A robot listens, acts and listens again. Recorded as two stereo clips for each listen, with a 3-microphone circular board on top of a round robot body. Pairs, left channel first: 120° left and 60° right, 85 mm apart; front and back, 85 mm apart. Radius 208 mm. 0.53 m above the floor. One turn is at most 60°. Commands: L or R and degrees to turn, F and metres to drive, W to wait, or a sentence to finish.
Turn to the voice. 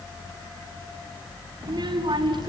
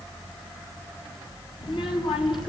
R30
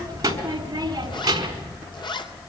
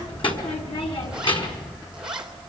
R20
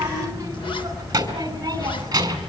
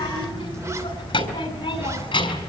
R10
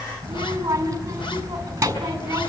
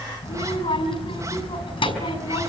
Found it: a child speaking, straight ahead.